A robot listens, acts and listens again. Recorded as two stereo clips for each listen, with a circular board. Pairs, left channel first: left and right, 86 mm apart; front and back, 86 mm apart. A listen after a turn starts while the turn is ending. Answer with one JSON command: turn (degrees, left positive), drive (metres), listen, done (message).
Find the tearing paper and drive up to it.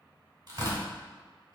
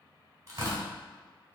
{"turn": -130}
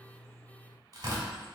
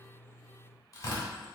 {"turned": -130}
{"turn": -50}
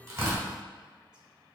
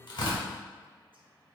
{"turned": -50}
{"listen": true}
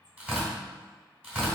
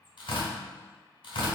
{"turn": -10}
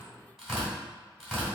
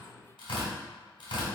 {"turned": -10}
{"drive": 1.0}
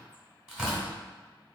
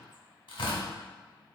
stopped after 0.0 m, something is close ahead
{"done": "Blocked. The tearing paper is further on, straight ahead."}